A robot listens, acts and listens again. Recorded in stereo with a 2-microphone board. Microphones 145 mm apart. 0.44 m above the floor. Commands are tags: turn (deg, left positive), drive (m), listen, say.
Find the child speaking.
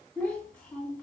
<turn deg="30"/>
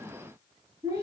<turn deg="-25"/>
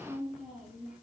<say>Facing the child speaking.</say>